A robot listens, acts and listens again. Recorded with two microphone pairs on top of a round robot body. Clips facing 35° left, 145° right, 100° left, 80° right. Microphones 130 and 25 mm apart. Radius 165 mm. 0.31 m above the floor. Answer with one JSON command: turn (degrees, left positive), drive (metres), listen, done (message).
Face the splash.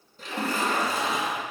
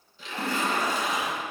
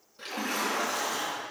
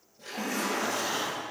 {"turn": 80}
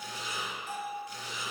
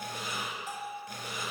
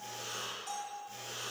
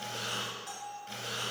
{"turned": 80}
{"done": "Facing where the splash came from. I can't hear it now."}